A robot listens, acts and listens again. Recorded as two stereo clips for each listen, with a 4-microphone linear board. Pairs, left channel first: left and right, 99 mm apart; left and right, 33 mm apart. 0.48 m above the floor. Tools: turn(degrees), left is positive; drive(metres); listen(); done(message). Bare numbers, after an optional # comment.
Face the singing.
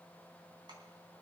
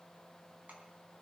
listen()
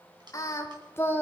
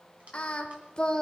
# The singing: about 20° left or 160° left.
turn(20)
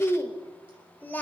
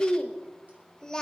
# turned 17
# The singing: about 20° left or 160° left.
turn(20)
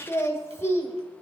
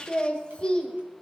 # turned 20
# The singing: about 25° left or 155° left.
turn(25)
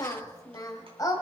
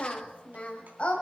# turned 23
# The singing: about 35° left or 145° left.
turn(35)
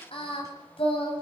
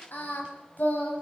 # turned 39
# So it is at 115° left.
turn(115)
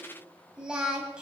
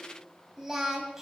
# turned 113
# The singing is now 10° right.
turn(-10)
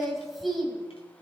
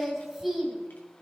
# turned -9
done("Facing the singing, 2 to 4 m away.")